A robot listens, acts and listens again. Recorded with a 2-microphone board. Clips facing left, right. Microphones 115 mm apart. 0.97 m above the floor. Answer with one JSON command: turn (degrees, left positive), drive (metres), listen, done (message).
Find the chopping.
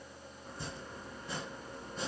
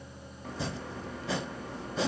{"turn": -90}
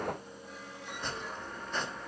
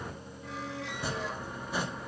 {"turn": -10}
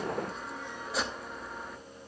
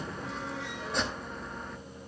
{"done": "Facing the chopping, 1 to 2 m away."}